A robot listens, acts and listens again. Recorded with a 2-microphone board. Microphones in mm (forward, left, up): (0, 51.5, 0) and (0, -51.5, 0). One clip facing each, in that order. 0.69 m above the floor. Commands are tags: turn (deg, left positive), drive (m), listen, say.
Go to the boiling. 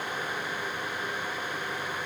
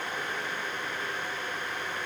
<listen/>
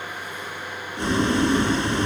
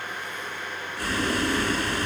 <turn deg="20"/>
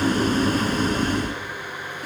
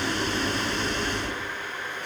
<turn deg="140"/>
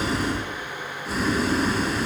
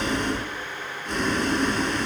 <drive m="1.0"/>
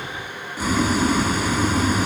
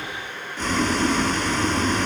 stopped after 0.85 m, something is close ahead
<turn deg="10"/>
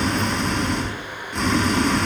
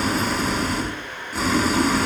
<say>Something is in my way. I am facing the boiling but have not reached it.</say>